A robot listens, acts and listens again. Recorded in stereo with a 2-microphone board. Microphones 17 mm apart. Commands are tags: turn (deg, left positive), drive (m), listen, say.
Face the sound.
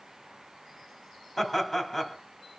<turn deg="30"/>
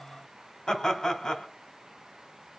<turn deg="145"/>
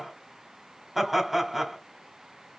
<say>Facing the laughter, 1 to 2 m away.</say>